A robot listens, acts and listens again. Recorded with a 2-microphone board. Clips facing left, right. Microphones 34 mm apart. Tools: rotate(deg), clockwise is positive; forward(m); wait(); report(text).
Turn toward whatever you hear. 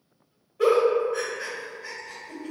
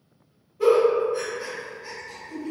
rotate(-90)
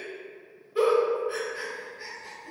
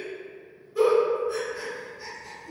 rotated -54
rotate(-35)
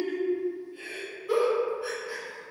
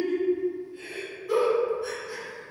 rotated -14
rotate(-20)
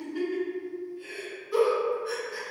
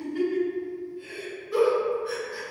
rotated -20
report("Found it: a giggle, straight ahead.")